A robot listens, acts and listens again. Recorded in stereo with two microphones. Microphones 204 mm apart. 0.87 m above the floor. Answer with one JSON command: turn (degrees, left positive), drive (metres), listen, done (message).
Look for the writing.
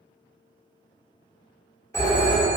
{"listen": true}
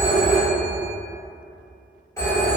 {"listen": true}
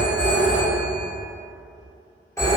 {"done": "I can't make out writing to turn to."}